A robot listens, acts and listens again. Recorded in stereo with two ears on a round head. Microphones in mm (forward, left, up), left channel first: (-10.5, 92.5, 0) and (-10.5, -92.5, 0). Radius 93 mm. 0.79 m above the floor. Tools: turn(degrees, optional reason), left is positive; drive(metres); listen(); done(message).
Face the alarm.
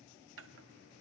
listen()
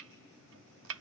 listen()
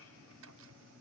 done("I can't make out an alarm to turn to.")